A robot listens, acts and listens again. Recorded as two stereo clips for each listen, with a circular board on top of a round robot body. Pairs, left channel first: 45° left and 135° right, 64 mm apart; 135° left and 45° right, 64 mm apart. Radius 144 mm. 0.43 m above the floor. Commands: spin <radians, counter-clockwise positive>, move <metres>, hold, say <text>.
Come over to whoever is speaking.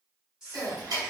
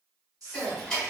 spin -0.96
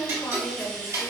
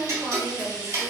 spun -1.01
hold
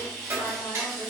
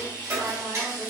hold
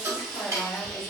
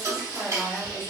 say Facing where the woman speaking came from. I can't hear it now. I did not reach it.